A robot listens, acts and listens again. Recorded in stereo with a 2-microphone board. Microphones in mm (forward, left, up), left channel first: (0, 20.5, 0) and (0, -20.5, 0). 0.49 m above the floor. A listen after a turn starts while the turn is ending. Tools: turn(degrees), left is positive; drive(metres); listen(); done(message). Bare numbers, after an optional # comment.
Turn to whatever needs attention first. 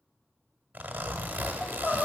# The crying: about 50° left or 130° left.
turn(50)
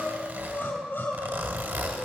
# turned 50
# So it is at 75° left.
turn(75)
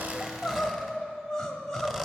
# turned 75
# The crying is now 15° left.
turn(15)
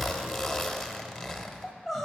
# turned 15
done("Found it: crying, straight ahead, 1 to 2 m away.")